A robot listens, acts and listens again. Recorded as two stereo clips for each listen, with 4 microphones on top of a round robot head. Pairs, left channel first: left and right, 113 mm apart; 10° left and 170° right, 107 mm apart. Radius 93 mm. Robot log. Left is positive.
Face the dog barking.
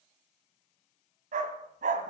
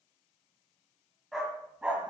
note: The dog barking: 90° right.
cmd yaw -90
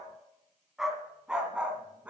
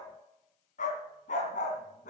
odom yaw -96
note: The dog barking is now 10° right.
cmd yaw -10
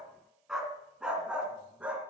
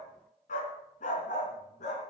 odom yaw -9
note: The dog barking is now 10° right.
cmd yaw -10
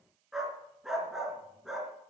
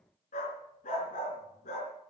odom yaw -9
end: Found it: a dog barking, straight ahead, 2 to 4 m away.